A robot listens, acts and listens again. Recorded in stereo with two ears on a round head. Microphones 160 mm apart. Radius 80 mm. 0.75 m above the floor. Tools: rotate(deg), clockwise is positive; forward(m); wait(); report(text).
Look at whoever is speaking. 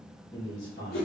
rotate(-25)
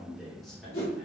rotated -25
report("Facing the man speaking, 1 to 2 m away.")